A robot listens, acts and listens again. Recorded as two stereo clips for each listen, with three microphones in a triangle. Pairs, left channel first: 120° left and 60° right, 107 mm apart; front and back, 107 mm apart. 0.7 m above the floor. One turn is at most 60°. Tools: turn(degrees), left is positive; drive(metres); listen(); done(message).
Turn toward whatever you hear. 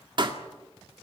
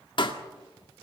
turn(degrees=-30)
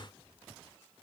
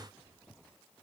done("Facing where the pop came from. I can't hear it now.")